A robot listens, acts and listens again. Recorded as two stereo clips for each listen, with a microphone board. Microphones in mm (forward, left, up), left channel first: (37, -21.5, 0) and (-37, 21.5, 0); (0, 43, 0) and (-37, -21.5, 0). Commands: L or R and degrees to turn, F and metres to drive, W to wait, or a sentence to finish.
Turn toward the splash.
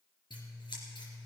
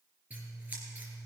W
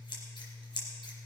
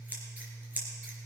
W
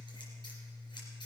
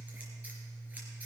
I can't make out a splash, only scissors.